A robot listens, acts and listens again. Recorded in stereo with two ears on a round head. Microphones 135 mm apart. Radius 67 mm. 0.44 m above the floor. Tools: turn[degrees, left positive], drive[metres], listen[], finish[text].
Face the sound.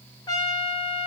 Thought: The trumpet: about 25° left or 155° left.
Action: turn[25]
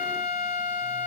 Thought: So it is at 130° left.
Action: turn[130]
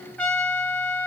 Thought: The trumpet is now 10° left.
Action: turn[10]
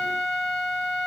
Action: finish[Facing the trumpet, 1 to 2 m away.]